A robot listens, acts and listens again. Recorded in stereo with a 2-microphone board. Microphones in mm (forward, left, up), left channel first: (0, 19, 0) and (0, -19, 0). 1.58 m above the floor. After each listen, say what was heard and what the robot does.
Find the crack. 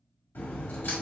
The crack: about 60° left or 120° left. Turn 60° left.
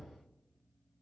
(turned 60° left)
Keep listening.
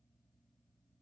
I heard a crack, but can't make it out now. It was about straight ahead or 60° left.